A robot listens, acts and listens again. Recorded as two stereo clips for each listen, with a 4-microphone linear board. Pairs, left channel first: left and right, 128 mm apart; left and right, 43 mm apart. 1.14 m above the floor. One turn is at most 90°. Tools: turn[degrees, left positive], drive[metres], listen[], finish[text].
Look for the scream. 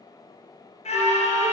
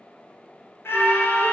Thought: The scream: about 60° left or 120° left.
Action: turn[60]
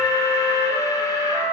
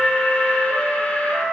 Action: listen[]
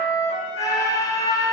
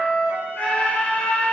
Thought: So it is at 30° left.
Action: turn[30]
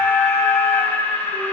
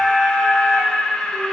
Thought: The scream is now 15° left.
Action: turn[15]
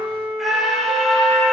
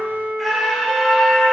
Action: finish[Facing the scream, under 1 m away.]